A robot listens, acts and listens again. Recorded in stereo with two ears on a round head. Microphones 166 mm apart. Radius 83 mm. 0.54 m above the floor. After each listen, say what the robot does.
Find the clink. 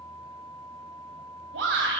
Keep listening.
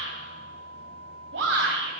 Keep listening.
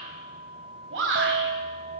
Turn 55° right.
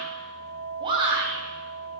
Turn 70° right.
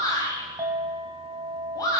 Turn 20° right.
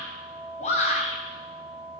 Facing the clink, 2 to 4 m away.